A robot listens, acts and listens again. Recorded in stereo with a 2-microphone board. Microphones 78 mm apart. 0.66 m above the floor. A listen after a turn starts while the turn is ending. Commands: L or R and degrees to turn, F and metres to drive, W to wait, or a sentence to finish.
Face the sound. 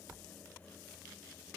W
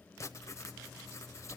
L40
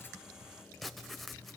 Found it: writing, straight ahead, under 1 m away.